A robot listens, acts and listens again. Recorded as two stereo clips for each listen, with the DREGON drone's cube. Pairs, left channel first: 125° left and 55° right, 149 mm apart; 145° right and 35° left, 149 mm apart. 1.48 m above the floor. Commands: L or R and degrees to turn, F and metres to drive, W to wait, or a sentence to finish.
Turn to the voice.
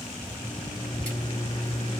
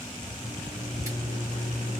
W
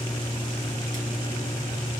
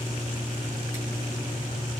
W
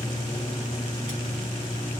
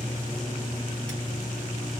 I can't make out anyone speaking to turn to.